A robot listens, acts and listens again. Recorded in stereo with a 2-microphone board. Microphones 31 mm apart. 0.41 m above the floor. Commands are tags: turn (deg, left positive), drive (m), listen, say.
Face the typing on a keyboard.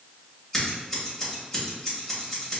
<listen/>
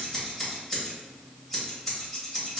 <listen/>
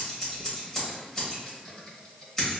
<turn deg="30"/>
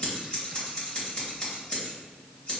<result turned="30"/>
<listen/>
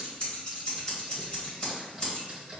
<turn deg="-15"/>
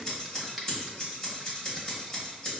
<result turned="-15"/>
<say>Facing the typing on a keyboard, 1 to 2 m away.</say>